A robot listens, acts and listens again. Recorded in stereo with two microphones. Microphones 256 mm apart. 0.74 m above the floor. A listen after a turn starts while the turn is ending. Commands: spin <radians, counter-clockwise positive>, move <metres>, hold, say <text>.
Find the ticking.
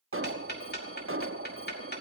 spin 0.70
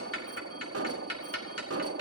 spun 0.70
spin 1.75
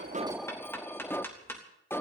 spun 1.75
spin 0.17
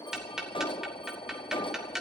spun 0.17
say Found it: ticking, straight ahead, 2 to 4 m away.